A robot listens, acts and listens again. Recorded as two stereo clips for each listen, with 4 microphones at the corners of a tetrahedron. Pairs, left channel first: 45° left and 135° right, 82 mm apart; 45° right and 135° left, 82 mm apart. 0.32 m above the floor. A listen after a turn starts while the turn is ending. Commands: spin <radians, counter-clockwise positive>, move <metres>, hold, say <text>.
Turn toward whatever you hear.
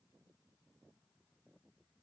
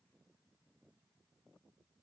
hold
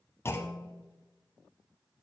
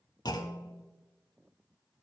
spin -0.26
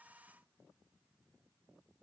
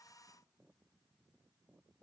say I heard a clunk from this way, but can't make it out now.